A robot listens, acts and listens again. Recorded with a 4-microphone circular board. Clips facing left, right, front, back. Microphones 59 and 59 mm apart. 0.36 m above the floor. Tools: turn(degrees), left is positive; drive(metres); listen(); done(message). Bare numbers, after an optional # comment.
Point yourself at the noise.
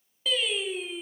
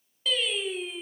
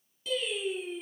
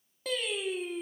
# The singing: 175° left.
turn(175)
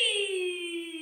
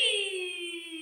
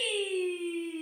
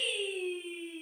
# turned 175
# The singing is now 10° left.
turn(10)
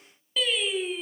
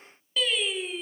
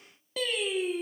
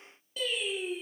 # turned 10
done("Found it: singing, straight ahead.")